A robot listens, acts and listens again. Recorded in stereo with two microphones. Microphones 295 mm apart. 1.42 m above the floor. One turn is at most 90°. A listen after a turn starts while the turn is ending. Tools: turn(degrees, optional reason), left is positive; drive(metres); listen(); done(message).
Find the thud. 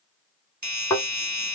turn(degrees=30)
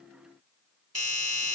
listen()
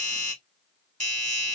done("I heard a thud, but can't make it out now. It was about 20° right or 140° left.")